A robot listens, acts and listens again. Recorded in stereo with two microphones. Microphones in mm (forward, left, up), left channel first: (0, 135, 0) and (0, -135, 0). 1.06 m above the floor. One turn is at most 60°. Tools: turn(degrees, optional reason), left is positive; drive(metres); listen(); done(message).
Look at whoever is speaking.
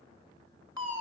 listen()
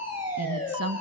turn(degrees=-60, reason="The woman speaking: about 65° right or 115° right.")
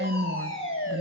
turn(degrees=-45, reason="So it is at 45° right.")
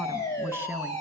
turn(degrees=-10, reason="The woman speaking is now 10° right.")
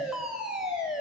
listen()
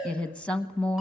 done("Facing the woman speaking, 1 to 2 m away.")